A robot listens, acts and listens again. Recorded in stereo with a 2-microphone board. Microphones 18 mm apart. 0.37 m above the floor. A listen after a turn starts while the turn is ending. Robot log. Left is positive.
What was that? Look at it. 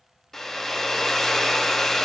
note: The hair dryer: about 15° left or 165° left.
cmd yaw +15
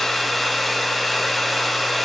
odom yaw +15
end: Found it: a hair dryer, straight ahead, under 1 m away.